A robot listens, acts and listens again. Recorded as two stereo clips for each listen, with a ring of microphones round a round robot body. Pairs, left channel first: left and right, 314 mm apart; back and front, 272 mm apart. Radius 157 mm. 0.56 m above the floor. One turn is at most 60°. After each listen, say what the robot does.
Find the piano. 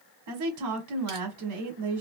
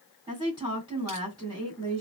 Keep listening.
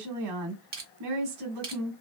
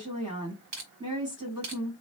Keep listening.
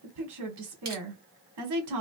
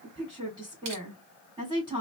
I can't make out a piano to turn to.